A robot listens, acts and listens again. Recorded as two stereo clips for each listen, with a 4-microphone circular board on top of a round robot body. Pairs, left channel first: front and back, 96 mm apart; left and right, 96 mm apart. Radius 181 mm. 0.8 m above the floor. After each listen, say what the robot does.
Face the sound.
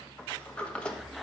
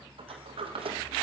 Turn 80° right.
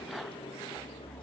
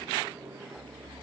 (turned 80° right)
Turn 20° right.
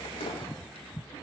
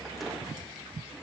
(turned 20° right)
Keep listening.
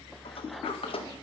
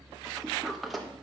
Found it: a sliding door, straight ahead.